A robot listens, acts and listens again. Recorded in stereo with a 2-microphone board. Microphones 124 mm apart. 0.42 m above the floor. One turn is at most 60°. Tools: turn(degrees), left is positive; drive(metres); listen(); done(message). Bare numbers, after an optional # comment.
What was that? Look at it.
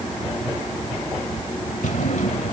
# The drawer: about 65° left or 115° left.
turn(60)
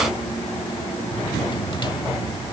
listen()
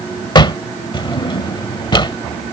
# So it is at 40° left.
turn(40)
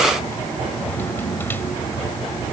listen()
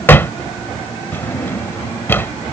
# The drawer is now 15° left.
turn(15)
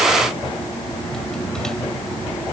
listen()
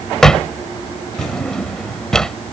done("Facing the drawer.")